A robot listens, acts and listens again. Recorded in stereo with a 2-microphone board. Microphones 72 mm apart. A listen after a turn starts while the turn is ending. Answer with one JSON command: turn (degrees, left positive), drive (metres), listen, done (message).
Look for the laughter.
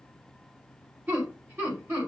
{"turn": -30}
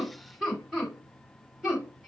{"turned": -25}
{"done": "Found it: laughter, straight ahead, 2 to 4 m away."}